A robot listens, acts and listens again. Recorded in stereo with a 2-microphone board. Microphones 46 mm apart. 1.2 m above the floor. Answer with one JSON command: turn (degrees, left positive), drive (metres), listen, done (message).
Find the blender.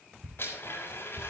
{"turn": 55}
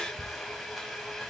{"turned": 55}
{"done": "Facing the blender, over 4 m away."}